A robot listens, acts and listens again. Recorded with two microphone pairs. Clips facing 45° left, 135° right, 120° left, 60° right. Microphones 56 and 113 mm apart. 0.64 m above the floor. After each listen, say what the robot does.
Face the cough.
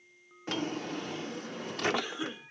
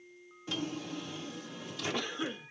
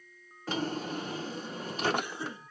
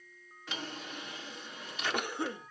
Turn 40° right.
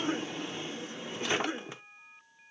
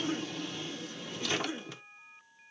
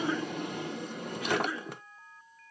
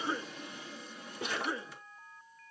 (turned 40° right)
Facing the cough.